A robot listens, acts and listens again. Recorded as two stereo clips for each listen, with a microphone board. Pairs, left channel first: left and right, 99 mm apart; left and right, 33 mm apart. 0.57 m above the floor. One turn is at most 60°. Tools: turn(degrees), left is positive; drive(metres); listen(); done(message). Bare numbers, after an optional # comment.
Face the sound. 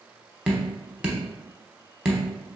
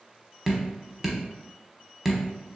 turn(-30)
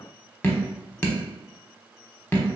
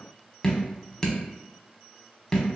# So it is at 20° left.
turn(20)
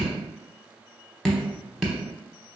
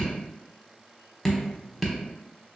done("Found it: dripping, straight ahead.")